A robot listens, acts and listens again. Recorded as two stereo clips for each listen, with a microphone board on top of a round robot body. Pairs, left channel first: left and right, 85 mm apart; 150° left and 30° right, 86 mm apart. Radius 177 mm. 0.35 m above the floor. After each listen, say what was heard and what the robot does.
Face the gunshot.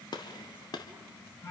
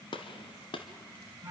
The gunshot: 130° left. Turn 130° left.
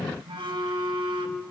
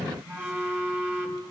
I heard a gunshot from this way, but can't make it out now.